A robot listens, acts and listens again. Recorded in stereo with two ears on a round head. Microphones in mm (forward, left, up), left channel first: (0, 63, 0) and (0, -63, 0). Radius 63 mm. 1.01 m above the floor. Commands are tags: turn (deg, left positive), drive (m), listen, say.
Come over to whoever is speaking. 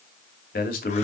<turn deg="70"/>
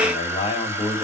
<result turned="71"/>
<turn deg="35"/>
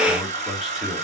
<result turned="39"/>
<drive m="1.0"/>
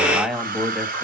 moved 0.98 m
<drive m="1.0"/>
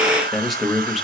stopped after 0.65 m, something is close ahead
<say>Arrived at the man speaking, straight ahead.</say>